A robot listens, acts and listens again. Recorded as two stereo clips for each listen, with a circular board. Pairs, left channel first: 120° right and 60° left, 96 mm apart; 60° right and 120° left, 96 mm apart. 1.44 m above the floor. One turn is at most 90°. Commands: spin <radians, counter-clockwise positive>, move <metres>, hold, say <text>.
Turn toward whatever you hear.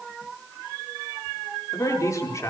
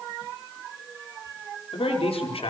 spin -1.13
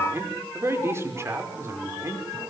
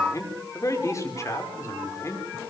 say Facing the man speaking.